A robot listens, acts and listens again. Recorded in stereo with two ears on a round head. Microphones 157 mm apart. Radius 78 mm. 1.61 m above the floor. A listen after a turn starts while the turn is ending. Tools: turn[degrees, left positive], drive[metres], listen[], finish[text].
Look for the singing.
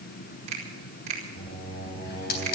Thought: The singing: about 30° left or 150° left.
Action: turn[30]
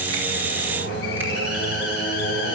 Thought: So it is at 115° left.
Action: turn[115]
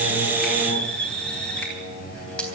Thought: The singing is now 35° left.
Action: turn[35]
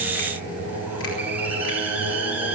Thought: The singing is now 15° left.
Action: turn[15]
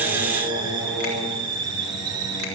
Action: finish[Found it: singing, straight ahead, over 4 m away.]